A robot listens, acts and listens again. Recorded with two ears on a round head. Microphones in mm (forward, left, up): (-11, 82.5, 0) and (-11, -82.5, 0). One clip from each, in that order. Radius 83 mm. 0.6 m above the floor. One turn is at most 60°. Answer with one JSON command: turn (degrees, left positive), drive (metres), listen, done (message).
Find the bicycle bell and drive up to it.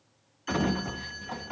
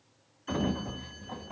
{"listen": true}
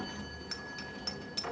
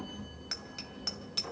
{"turn": -30}
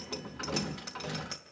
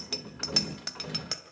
{"turn": -60}
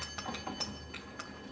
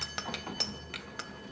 {"turn": -60}
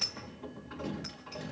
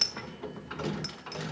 {"turn": -45}
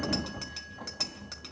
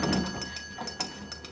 {"drive": 1.0}
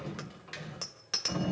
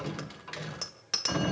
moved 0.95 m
{"drive": 1.0}
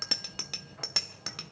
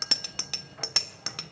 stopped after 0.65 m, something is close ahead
{"turn": -15}
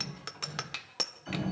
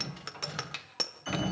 {"done": "Arrived at the bicycle bell, straight ahead."}